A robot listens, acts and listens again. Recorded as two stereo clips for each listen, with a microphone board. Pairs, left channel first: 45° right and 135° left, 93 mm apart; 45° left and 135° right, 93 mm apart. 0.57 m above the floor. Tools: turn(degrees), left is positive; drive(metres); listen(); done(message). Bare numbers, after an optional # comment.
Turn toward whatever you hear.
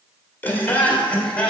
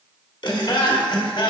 # The laughter: 35° left.
turn(35)
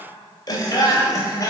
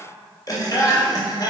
done("Found it: laughter, straight ahead, 2 to 4 m away.")